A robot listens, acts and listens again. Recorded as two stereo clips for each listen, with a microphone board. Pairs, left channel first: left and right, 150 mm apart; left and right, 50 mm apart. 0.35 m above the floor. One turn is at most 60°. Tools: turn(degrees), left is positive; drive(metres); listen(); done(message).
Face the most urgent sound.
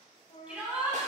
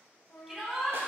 turn(degrees=-30)
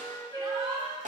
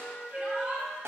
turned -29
turn(degrees=-60)
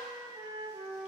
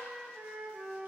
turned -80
turn(degrees=-60)
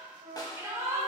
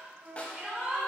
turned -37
turn(degrees=-25)
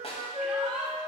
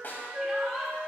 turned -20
done("Facing the shout.")